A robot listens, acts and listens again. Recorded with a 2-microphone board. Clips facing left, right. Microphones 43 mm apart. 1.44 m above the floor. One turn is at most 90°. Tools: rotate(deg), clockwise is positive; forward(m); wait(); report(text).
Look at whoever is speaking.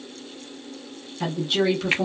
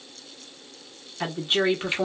rotate(30)
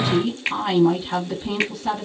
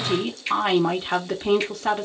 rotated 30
rotate(90)
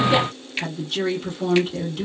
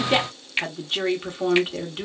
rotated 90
rotate(25)
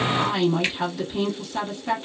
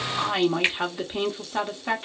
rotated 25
rotate(25)
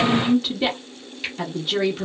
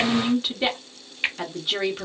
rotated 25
report("Found it: a woman speaking, straight ahead.")